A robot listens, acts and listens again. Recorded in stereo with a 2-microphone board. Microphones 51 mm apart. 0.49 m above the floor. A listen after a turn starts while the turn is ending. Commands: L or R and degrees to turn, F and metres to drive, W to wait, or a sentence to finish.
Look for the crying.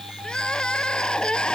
L15
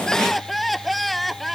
Facing the crying.